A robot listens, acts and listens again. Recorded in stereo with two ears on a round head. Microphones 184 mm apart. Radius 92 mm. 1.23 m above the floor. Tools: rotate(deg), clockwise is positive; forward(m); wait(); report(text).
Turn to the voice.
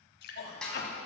rotate(-50)
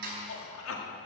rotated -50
rotate(-75)
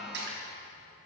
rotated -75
wait()
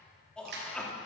report("Found it: a man speaking, straight ahead, 2 to 4 m away.")